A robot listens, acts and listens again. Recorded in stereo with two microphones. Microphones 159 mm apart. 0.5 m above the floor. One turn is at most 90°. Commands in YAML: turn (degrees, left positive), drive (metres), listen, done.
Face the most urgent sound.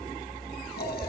listen: true
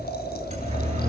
turn: -45
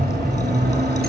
turn: -90
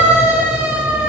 done: "Found it: a siren, straight ahead, over 4 m away."